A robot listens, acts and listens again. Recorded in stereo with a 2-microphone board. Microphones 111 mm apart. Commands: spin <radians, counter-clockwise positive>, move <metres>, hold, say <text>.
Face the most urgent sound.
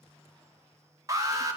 spin -0.52
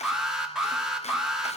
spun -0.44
say Facing the alarm, 2 to 4 m away.